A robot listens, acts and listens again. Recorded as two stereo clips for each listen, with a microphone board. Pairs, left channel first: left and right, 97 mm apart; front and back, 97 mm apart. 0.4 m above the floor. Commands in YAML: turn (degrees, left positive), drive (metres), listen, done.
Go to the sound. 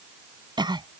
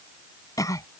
turn: -55
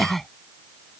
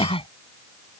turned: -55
drive: 1.0
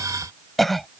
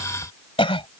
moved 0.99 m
drive: 1.0
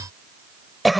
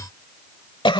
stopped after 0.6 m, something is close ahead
done: "I am next to the cough."